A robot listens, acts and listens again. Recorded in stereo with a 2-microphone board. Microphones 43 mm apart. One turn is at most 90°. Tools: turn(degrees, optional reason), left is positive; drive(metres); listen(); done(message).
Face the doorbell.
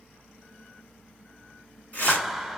listen()
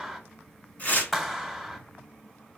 listen()
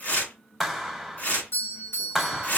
turn(degrees=75, reason="The doorbell: about 75° left or 105° left.")
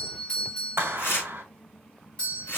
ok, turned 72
turn(degrees=30, reason="So it is at 30° left.")
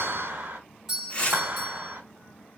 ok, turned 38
turn(degrees=-10, reason="The doorbell is now 10° right.")
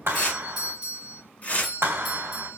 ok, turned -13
done("Found it: a doorbell, straight ahead.")